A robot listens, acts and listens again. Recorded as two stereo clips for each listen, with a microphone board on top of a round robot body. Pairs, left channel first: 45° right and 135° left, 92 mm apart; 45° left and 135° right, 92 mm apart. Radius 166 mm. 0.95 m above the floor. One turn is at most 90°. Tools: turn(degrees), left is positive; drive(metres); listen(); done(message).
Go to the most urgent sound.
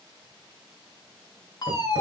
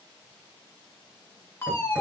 turn(degrees=-15)
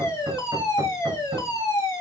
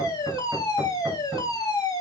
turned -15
drive(metres=1.0)
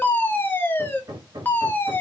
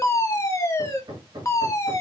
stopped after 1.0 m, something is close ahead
turn(degrees=10)
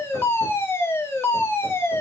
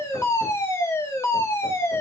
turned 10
done("Arrived at the fire alarm, straight ahead.")